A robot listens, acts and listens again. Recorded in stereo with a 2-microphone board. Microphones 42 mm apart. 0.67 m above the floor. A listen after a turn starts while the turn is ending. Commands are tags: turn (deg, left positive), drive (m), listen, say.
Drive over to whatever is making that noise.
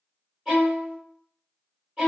<turn deg="-30"/>
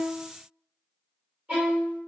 <turn deg="-140"/>
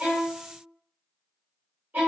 <turn deg="-45"/>
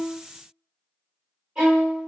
<turn deg="-20"/>
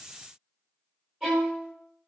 <turn deg="-10"/>
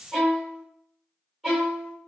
<drive m="1.0"/>
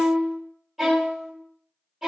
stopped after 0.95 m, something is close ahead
<say>Arrived at the violin, straight ahead.</say>